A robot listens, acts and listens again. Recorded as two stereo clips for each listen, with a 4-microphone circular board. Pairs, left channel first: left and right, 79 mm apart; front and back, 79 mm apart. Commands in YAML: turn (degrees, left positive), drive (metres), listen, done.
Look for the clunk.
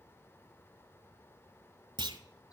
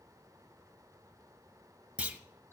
turn: -105
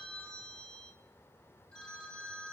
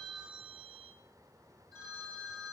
done: "Facing where the clunk came from. I can't hear it now."